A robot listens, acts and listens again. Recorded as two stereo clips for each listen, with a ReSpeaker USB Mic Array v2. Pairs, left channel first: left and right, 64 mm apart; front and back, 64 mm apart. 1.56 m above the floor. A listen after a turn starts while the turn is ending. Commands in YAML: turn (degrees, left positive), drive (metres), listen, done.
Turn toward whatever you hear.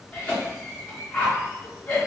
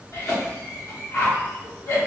turn: 20
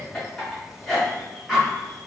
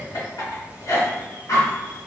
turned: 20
done: "Found it: a cough, straight ahead."